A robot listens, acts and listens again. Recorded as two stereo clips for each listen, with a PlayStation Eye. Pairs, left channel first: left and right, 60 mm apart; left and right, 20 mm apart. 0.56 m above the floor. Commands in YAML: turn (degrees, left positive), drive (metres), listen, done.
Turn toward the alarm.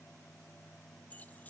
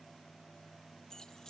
listen: true
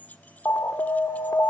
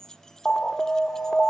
turn: 40
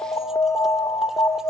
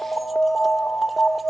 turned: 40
turn: 90
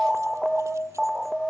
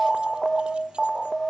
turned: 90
turn: -10
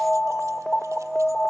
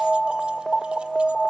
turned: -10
done: "Found it: an alarm, straight ahead, 1 to 2 m away."